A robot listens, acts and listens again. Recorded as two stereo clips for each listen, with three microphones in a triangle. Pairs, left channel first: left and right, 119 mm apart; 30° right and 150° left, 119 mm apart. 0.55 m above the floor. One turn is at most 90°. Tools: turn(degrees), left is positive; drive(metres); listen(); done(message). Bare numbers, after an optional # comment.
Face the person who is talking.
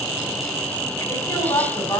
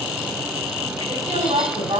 # The woman speaking: 150° left.
turn(90)
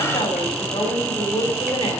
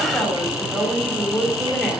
# The woman speaking is now 60° left.
turn(60)
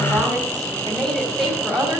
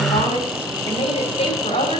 done("Facing the woman speaking.")